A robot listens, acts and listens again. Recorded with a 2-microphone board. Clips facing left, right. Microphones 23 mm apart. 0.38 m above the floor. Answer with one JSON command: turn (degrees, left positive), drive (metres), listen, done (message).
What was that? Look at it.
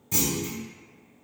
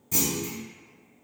{"turn": 30}
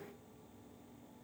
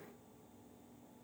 {"listen": true}
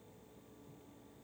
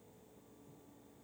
{"done": "I heard a clunk, but can't make it out now. It was about 20° right or 140° left."}